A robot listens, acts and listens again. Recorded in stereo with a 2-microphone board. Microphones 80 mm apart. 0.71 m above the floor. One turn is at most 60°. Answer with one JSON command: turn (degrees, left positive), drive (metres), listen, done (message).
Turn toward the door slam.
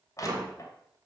{"turn": -50}
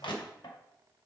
{"listen": true}
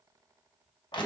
{"done": "I heard a door slam, but can't make it out now. It was about straight ahead or 80° right."}